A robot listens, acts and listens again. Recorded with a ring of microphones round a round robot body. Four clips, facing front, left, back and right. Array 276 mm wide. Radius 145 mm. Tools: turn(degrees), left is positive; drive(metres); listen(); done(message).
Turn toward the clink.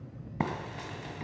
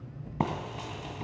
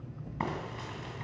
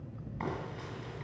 listen()
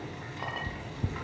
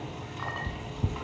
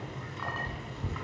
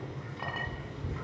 turn(degrees=-45)
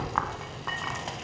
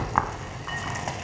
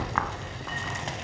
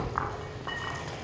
listen()
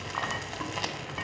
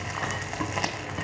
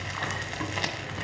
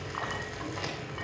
listen()
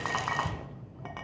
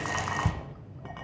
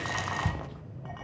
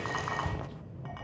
done("I heard a clink from this way, but can't make it out now.")